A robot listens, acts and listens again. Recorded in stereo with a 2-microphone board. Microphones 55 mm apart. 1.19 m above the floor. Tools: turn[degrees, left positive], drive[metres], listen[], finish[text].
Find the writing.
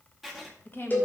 Action: turn[30]
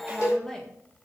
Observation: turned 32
Action: listen[]
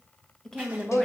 Action: listen[]
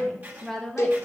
Thought: So it is at 35° right.
Action: turn[-35]
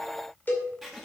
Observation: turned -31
Action: finish[Found it: writing, straight ahead, 1 to 2 m away.]